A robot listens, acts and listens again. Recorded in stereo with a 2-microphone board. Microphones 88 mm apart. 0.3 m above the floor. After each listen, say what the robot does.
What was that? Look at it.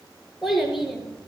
Turn 30° left.
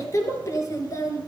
Turn 140° left.
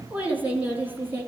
Turn 25° right.
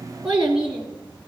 Turn 15° right.
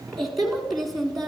Found it: a child speaking, straight ahead.